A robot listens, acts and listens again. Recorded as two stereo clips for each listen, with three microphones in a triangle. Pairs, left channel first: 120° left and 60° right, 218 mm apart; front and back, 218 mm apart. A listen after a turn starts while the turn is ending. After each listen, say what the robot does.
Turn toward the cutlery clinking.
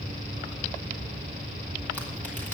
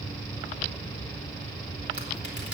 Keep listening.
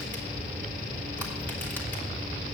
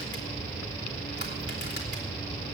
Keep listening.
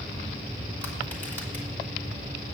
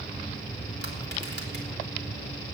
I can't make out cutlery clinking.